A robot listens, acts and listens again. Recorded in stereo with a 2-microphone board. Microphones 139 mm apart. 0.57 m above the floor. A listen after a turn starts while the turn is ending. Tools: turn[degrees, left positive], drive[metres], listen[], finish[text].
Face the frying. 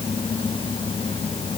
Action: listen[]
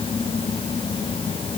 Action: listen[]
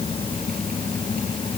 Action: finish[I can't make out frying.]